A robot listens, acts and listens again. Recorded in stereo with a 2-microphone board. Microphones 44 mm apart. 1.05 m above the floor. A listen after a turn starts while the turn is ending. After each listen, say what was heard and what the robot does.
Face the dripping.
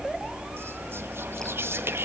Keep listening.
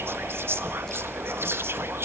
Keep listening.
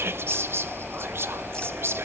I can't make out dripping to turn to.